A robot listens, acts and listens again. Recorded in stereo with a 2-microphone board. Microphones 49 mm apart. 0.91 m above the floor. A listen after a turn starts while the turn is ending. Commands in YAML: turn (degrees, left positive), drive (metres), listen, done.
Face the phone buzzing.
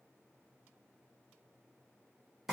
listen: true
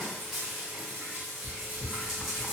listen: true
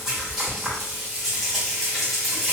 done: "I can't make out a phone buzzing, only frying."